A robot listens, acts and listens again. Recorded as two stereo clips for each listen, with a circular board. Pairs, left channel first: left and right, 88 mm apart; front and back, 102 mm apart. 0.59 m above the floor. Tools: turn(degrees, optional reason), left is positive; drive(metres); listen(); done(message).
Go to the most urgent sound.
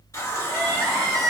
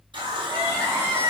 turn(degrees=-125, reason="The crying: 125° right.")
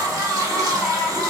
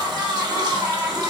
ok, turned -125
turn(degrees=-45, reason="The crying is now 45° right.")
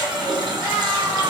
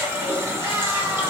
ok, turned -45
listen()
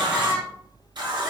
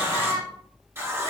turn(degrees=-25, reason="The crying is now 25° right.")
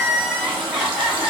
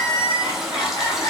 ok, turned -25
drive(metres=1.0)
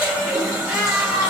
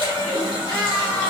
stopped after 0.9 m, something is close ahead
turn(degrees=-10, reason="The crying is now 10° right.")
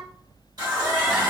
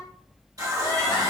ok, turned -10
listen()
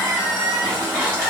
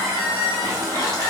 done("Arrived at the crying, straight ahead.")